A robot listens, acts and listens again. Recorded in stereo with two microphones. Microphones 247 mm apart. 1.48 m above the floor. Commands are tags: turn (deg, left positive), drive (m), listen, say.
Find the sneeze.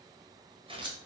<listen/>
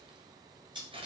<listen/>
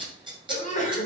<turn deg="30"/>
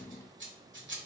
<listen/>
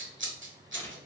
<say>I heard a sneeze, but can't make it out now. It was about straight ahead or 120° left.</say>